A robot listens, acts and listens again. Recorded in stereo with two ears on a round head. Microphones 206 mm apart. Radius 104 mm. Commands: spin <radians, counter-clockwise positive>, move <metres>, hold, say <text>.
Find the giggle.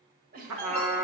spin -0.70
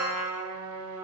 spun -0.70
hold
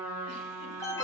hold
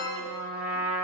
say I heard a giggle, but can't make it out now. It was about straight ahead or 100° right.